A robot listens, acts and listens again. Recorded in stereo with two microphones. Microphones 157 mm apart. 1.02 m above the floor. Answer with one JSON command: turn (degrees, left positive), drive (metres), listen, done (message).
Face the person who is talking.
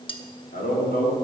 {"turn": 90}
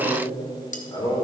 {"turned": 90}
{"turn": 35}
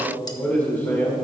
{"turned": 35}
{"turn": 15}
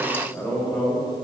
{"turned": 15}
{"turn": 10}
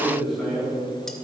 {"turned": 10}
{"done": "Found it: a man speaking, straight ahead."}